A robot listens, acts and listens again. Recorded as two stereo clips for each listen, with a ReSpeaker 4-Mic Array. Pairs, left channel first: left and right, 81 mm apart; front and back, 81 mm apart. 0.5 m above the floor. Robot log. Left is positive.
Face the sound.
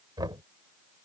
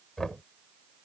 note: The knocking: 85° right.
cmd yaw -85
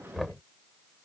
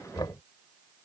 end: Found it: knocking, straight ahead.